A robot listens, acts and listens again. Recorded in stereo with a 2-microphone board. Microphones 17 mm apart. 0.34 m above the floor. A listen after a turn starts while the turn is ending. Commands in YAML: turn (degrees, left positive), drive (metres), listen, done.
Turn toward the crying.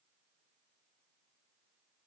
listen: true
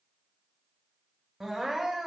turn: -25
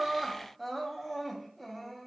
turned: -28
done: "Facing the crying, under 1 m away."